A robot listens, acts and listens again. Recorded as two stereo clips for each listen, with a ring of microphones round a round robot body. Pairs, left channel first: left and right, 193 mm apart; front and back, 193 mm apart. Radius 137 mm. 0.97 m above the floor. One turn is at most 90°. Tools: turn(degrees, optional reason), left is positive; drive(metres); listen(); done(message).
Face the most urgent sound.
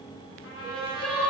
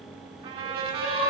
done("Facing the crying.")